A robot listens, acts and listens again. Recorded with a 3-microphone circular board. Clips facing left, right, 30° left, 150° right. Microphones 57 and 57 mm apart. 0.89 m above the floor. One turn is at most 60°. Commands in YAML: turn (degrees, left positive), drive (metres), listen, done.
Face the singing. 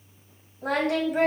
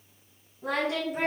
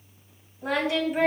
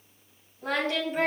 turn: 60
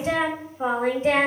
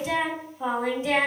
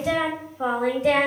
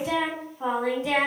turn: 40
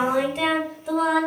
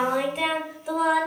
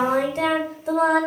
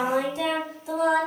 done: "Found it: singing, straight ahead."